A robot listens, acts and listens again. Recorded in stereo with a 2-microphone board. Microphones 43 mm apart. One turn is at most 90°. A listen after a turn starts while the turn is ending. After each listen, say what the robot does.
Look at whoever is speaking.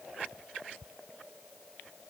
Keep listening.
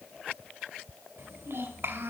Turn 65° right.
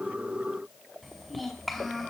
Found it: a child speaking, straight ahead.